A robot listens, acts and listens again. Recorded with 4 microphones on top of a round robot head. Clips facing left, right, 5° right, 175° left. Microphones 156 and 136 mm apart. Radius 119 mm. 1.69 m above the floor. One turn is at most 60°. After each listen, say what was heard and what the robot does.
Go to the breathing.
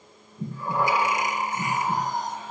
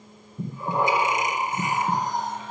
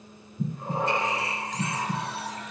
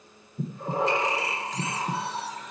The breathing: 155° right. Turn 60° right.
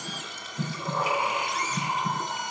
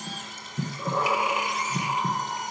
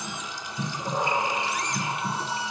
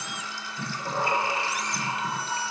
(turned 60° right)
The breathing is now 95° right. Turn 60° right.
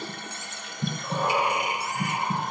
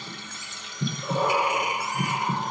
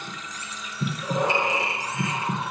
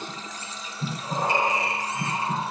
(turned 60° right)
The breathing is now 35° right. Turn 35° right.
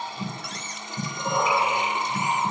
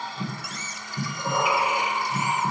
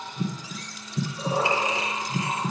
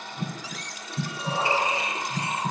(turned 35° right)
Drive 1.0 m forward.
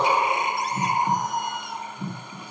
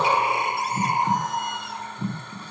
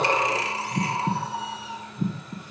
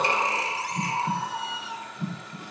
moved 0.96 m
Drive 1.0 m forward.
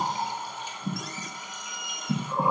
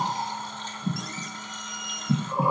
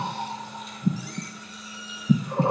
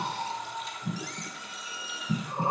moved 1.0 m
Drive 1.0 m forward.
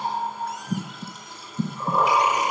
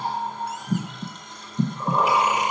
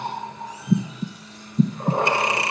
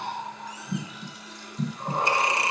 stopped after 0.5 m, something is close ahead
I am next to the breathing.